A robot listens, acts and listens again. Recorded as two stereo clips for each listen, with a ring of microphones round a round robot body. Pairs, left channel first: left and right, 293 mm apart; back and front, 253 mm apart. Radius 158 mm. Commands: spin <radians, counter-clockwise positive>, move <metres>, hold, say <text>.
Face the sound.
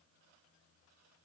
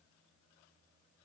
hold
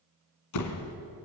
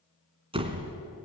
spin 1.22
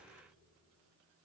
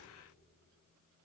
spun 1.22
say I heard a door slam from this way, but can't make it out now.